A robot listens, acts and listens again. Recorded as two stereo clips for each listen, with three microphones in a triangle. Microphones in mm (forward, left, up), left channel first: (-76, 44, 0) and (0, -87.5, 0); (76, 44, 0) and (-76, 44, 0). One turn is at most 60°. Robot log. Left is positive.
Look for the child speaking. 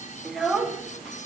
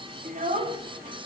note: The child speaking: 150° right.
cmd yaw -60
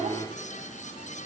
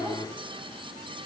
note: The child speaking is now 105° right.
cmd yaw -60
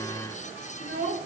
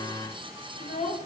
note: The child speaking is now 40° right.
cmd yaw -40
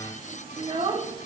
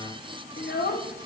end: Facing the child speaking, under 1 m away.